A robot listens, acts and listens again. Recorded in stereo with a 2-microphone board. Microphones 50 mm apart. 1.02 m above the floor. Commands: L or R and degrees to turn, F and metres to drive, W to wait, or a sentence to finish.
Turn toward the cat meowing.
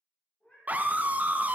L25
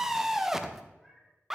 L10
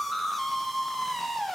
W
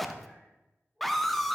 Found it: a cat meowing, straight ahead, over 4 m away.